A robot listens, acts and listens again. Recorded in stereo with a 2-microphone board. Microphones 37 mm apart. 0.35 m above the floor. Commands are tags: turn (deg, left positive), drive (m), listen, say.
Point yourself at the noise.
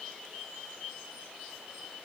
<listen/>
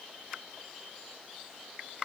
<listen/>
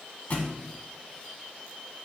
<turn deg="45"/>
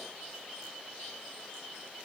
<listen/>
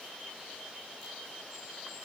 <say>I heard a thud, but can't make it out now. It was about straight ahead or 90° left.</say>